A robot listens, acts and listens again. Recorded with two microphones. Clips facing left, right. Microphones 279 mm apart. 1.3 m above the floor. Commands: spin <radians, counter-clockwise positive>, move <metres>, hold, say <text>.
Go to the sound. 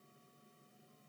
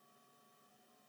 hold
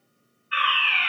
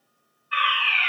spin -0.79
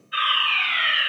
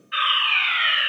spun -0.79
spin -1.48
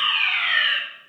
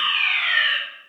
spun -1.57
move 1.0
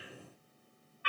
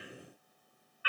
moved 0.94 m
move 1.0
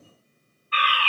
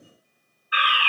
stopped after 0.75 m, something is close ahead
spin -0.26
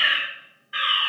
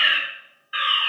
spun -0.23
say I am next to the fire alarm.